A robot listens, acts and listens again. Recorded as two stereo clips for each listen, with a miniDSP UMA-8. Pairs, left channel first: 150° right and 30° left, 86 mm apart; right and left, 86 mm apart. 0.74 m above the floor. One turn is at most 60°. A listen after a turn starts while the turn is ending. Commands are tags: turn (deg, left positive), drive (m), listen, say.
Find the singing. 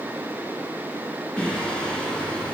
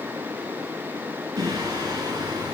<turn deg="60"/>
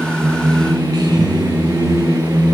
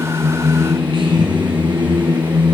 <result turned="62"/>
<turn deg="60"/>
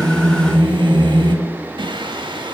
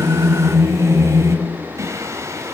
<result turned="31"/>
<turn deg="40"/>
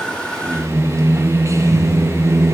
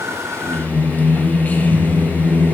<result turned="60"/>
<turn deg="-20"/>
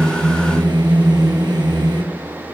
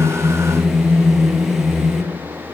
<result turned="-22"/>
<say>Found it: singing, straight ahead, 1 to 2 m away.</say>